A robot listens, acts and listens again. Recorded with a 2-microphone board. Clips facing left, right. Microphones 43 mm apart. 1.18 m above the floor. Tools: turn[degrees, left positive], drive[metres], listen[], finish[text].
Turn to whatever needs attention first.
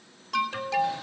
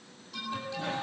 Action: turn[90]
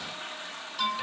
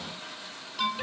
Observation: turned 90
Action: finish[Found it: an alarm, straight ahead, 2 to 4 m away.]